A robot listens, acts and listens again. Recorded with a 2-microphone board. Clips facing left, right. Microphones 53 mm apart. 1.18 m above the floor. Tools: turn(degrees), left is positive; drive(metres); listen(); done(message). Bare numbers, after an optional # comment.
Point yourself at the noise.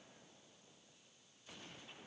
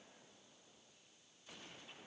listen()
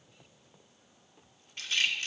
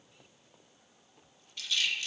# The rattle: about 45° left or 135° left.
turn(45)
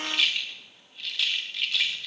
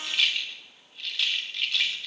done("Found it: a rattle, straight ahead.")